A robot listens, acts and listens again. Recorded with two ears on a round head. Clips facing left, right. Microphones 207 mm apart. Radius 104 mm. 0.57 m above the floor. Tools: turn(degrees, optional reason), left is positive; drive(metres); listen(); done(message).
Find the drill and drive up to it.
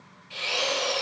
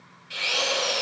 turn(degrees=-20, reason="The drill: about 20° right or 160° right.")
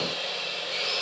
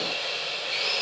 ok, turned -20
drive(metres=1.0)
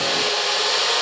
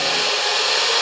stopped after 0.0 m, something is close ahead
done("Something is in my way. I am facing the drill but have not reached it.")